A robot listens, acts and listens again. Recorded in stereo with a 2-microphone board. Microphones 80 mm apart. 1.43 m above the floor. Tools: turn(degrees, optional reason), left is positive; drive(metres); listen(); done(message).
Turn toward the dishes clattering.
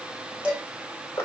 turn(degrees=-30)
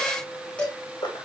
turn(degrees=15, reason="So it is at 15° left.")
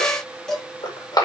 turn(degrees=10, reason="The dishes clattering is now 10° left.")
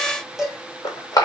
done("Found it: dishes clattering, straight ahead.")